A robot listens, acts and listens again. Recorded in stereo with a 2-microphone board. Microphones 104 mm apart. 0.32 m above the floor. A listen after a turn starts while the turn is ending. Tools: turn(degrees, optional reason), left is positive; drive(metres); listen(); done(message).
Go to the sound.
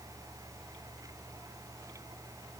listen()
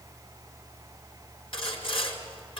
turn(degrees=60, reason="The sawing: about 60° left or 120° left.")
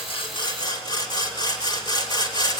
turn(degrees=50, reason="So it is at 50° left.")
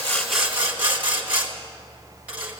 turn(degrees=-15, reason="The sawing is now 15° right.")
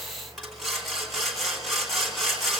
drive(metres=1.0)
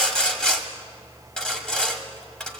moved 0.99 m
turn(degrees=10, reason="The sawing is now 10° left.")
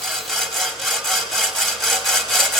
drive(metres=1.0)
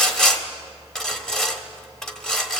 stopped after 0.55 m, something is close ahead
turn(degrees=10, reason="The sawing is now 10° left.")
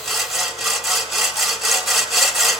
done("I am next to the sawing.")